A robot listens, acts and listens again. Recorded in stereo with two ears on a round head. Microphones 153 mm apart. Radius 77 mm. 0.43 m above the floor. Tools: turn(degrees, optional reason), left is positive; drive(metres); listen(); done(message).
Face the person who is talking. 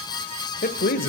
turn(degrees=55, reason="The man speaking: about 55° left or 125° left.")
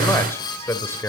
turn(degrees=15, reason="So it is at 15° left.")
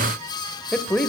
done("Facing the man speaking.")